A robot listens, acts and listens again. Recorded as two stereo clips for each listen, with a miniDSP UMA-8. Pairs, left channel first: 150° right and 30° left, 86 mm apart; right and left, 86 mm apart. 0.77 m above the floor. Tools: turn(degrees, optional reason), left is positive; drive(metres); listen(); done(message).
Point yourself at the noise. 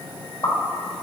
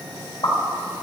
turn(degrees=-115, reason="The pop: 115° right.")
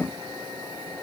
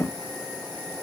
done("I heard a pop from this way, but can't make it out now.")